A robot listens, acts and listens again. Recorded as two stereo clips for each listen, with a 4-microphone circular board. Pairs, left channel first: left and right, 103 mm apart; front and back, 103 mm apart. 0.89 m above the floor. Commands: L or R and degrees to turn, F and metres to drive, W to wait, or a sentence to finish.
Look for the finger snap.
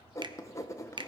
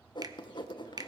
R130
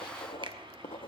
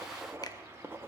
W
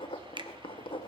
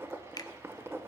R50
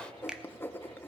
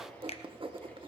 Found it: a finger snap, straight ahead.